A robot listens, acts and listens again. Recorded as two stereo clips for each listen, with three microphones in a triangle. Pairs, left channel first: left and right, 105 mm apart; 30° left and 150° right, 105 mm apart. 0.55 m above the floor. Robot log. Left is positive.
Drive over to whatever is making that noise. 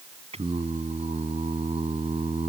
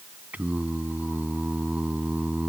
note: The singing: 75° right.
cmd yaw -75
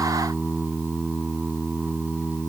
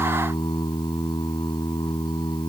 note: The singing is now 15° right.
cmd yaw -15
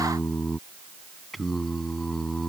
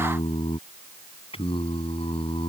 cmd fwd 1.0
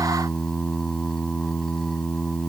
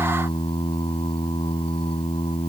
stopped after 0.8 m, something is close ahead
end: Blocked. The singing is further on, straight ahead.